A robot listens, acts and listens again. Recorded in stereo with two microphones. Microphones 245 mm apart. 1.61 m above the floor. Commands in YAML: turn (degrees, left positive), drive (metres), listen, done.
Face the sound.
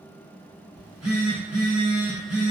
turn: -90
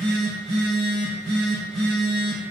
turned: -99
done: "Facing the phone buzzing, 1 to 2 m away."